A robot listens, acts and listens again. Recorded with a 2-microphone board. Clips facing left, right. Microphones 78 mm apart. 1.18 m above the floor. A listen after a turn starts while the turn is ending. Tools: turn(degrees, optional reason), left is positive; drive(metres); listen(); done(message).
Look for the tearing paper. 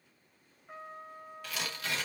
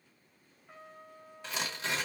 turn(degrees=-30, reason="The tearing paper: about 30° right or 150° right.")
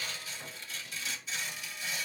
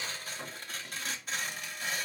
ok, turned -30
turn(degrees=-125, reason="So it is at 125° right.")
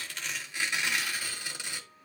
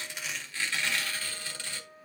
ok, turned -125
turn(degrees=15, reason="The tearing paper is now 15° left.")
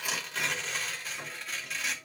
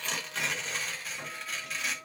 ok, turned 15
done("Facing the tearing paper.")